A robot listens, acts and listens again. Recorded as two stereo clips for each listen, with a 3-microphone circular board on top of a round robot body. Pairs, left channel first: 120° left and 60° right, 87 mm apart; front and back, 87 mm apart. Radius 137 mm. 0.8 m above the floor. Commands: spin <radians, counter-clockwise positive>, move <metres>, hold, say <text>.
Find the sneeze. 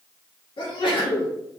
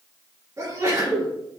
spin 2.18
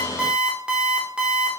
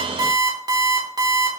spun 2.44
spin -0.26
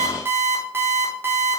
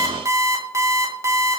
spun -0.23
say Facing where the sneeze came from. I can't hear it now.